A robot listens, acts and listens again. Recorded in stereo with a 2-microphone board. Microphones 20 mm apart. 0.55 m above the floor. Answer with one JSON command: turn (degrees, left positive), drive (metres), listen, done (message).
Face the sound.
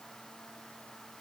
{"listen": true}
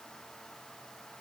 {"listen": true}
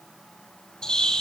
{"turn": 45}
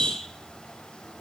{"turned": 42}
{"turn": 90}
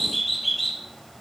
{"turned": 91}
{"done": "Found it: a bird, straight ahead, 2 to 4 m away."}